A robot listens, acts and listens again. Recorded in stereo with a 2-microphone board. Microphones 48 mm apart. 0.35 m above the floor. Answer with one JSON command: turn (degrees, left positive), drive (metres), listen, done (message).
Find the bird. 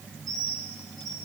{"turn": 30}
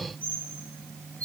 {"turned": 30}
{"turn": 150}
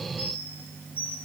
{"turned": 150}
{"turn": 50}
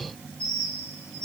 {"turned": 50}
{"turn": 20}
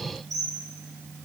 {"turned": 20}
{"done": "Found it: a bird, straight ahead."}